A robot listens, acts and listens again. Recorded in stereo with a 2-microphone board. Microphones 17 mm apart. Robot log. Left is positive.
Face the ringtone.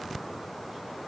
cmd idle
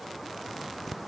cmd idle
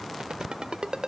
note: The ringtone: about 65° right or 115° right.
cmd yaw -65
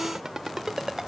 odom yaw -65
note: So it is at 40° right.
cmd yaw -40
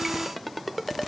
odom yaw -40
end: Found it: a ringtone, straight ahead.